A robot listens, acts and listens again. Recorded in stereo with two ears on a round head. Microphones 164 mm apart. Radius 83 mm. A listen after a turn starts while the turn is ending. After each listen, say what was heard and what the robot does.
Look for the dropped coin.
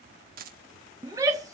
The dropped coin: about 50° right or 130° right. Turn 50° right.
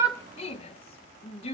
Keep listening.
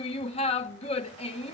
I heard a dropped coin, but can't make it out now. It was about straight ahead or 80° right.